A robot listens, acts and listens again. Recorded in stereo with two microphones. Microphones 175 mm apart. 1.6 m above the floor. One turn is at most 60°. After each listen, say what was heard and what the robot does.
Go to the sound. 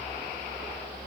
Keep listening.
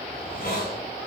The hiss: about 55° left or 125° left. Turn 55° left.
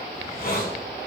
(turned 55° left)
So it is at 65° left. Turn 60° left.
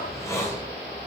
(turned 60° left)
The hiss is now 15° left. Turn 15° left.
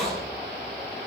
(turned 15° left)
Drive 1.0 m forward.
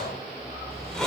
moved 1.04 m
Drive 1.0 m forward.
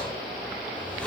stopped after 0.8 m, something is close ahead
The hiss is now 10° left. Turn 10° left.
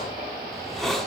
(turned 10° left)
Arrived at the hiss, straight ahead.